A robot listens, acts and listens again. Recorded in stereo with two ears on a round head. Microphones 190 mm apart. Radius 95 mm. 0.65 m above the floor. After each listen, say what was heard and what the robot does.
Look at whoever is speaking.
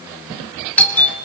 Keep listening.
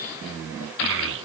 The child speaking: about 60° right or 120° right. Turn 60° right.
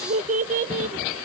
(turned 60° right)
So it is at 40° right. Turn 40° right.
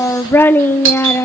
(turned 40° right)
The child speaking is now 10° left. Turn 10° left.
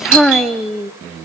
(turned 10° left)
Facing the child speaking, under 1 m away.